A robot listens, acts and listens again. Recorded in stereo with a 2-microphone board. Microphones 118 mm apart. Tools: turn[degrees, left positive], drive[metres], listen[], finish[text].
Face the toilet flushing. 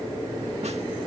Action: listen[]
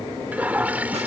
Action: turn[-30]
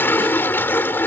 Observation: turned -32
Thought: So it is at 15° left.
Action: turn[15]
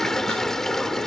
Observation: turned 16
Action: finish[Found it: a toilet flushing, straight ahead.]